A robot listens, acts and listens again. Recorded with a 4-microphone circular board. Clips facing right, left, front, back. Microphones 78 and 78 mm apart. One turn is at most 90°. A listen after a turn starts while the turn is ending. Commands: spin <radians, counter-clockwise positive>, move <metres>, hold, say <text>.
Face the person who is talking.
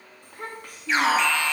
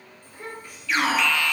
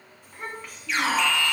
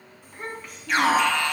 spin -1.57
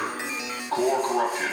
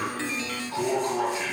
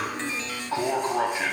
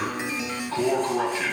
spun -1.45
hold
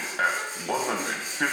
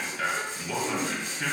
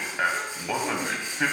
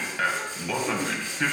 hold
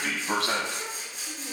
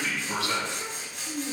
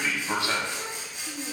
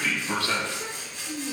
spin 0.26
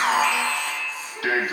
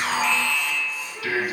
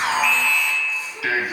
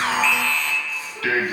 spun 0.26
hold
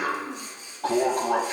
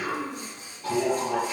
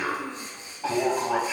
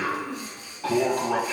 hold
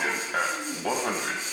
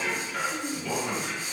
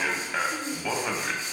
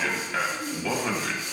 say Found it: a child speaking, straight ahead, over 4 m away.